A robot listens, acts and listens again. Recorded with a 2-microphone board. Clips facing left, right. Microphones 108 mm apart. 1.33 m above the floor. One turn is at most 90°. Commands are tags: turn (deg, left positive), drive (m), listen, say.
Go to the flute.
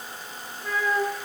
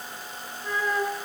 <turn deg="-30"/>
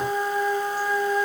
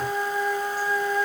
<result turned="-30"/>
<turn deg="20"/>
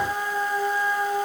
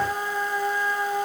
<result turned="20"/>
<drive m="1.0"/>
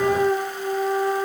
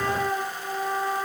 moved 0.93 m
<drive m="1.0"/>
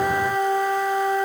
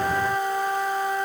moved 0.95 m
<drive m="1.0"/>
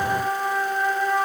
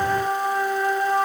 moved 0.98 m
<drive m="1.0"/>
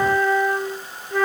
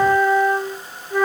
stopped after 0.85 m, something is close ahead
<say>I am next to the flute.</say>